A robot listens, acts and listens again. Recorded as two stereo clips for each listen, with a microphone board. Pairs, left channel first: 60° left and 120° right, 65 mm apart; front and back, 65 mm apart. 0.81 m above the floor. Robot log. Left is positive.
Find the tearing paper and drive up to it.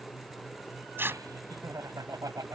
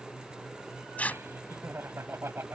note: The tearing paper: 65° right.
cmd yaw -65
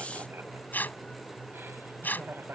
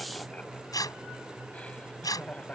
cmd fwd 1.0
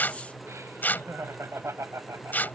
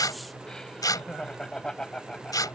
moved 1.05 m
cmd fwd 1.0
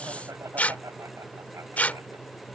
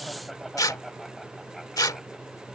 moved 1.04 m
cmd fwd 1.0
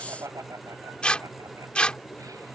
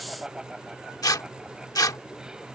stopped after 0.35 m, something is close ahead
note: The tearing paper is now 10° right.
cmd yaw -10
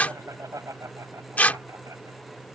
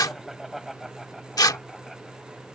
end: Arrived at the tearing paper, straight ahead.